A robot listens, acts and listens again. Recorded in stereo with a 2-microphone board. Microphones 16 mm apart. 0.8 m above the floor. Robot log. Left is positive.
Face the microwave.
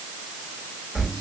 cmd idle
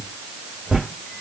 cmd idle
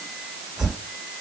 end: I can't make out a microwave, only a whoosh.